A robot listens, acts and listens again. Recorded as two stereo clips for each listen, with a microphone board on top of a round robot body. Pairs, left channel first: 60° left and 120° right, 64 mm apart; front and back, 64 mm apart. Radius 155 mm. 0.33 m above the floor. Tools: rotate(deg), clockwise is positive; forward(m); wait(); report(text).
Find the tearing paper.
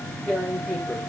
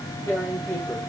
rotate(20)
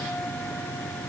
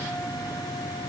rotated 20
wait()
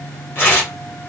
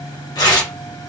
report("Found it: tearing paper, straight ahead.")